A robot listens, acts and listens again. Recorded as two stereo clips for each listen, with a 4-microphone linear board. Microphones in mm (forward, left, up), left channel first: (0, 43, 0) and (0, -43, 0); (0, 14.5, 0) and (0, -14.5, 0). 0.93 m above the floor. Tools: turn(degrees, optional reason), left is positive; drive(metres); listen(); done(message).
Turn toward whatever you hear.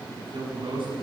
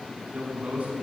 turn(degrees=-70, reason="The man speaking: about 70° right or 110° right.")
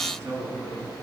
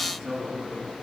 turn(degrees=-35, reason="So it is at 35° right.")
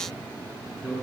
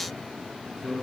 turn(degrees=-10, reason="The man speaking is now 10° right.")
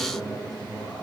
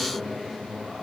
done("Found it: a man speaking, straight ahead.")